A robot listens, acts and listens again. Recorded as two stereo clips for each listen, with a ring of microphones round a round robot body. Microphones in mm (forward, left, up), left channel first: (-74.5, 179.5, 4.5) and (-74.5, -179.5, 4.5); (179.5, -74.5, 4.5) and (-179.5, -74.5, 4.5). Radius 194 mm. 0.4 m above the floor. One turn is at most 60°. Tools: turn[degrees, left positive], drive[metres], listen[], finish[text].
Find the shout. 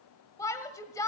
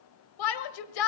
Thought: The shout: 10° left.
Action: turn[10]
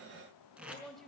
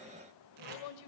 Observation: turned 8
Action: listen[]
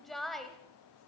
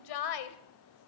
Action: finish[Found it: a shout, straight ahead.]